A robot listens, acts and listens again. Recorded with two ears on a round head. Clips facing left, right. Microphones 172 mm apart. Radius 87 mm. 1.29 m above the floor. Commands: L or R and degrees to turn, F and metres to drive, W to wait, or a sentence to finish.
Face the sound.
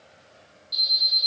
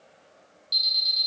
R65
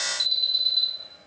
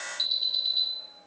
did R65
R15
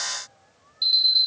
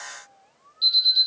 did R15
R10
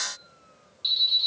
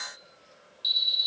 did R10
Found it: an alarm, straight ahead.